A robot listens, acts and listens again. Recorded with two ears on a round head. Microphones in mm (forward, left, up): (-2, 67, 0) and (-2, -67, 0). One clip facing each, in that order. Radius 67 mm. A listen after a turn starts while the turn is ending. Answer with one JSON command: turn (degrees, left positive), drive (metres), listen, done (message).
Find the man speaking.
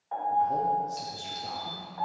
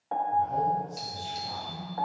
{"turn": 70}
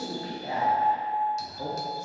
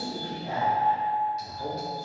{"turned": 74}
{"turn": 65}
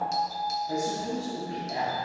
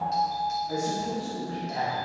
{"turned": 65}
{"turn": 25}
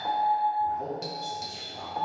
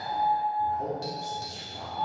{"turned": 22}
{"done": "Found it: a man speaking, straight ahead."}